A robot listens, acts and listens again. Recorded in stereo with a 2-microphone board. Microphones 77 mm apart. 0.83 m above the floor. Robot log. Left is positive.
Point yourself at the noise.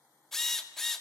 cmd yaw +30
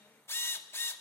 note: So it is at 145° left.
cmd yaw +145
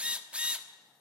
note: The drill is now 15° right.
cmd yaw -15
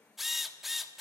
end: Facing the drill.